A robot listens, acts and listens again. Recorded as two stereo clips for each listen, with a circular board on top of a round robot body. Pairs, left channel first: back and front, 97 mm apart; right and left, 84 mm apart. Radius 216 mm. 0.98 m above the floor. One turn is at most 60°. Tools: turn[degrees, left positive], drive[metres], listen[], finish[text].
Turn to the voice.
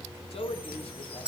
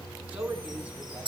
Thought: The man speaking: 165° left.
Action: turn[60]
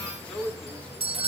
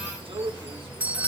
Thought: The man speaking is now 100° left.
Action: turn[60]
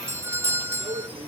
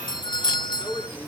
Thought: The man speaking is now 20° left.
Action: turn[20]
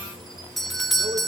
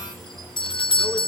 Action: listen[]
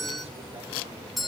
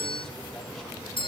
Action: listen[]
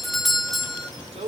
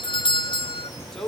Action: finish[Found it: a man speaking, straight ahead, over 4 m away.]